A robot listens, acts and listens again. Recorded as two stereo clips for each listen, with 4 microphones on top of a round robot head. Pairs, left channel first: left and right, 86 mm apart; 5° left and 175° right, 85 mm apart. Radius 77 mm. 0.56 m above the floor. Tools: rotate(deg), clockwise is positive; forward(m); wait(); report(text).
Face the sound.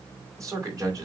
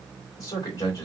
rotate(50)
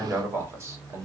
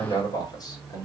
rotate(40)
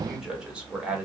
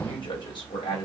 rotate(15)
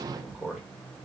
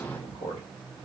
rotate(10)
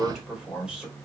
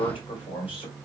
rotate(10)
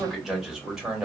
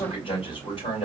rotate(10)
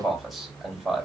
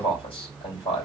report("Facing the man speaking, 2 to 4 m away.")